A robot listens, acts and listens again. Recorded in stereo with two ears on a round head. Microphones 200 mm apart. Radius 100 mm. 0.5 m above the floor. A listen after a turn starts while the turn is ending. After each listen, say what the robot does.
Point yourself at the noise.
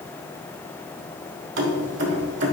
Turn 55° right.
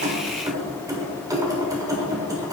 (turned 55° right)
Turn 20° right.
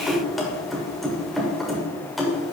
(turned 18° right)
Found it: keys jangling, straight ahead, 1 to 2 m away.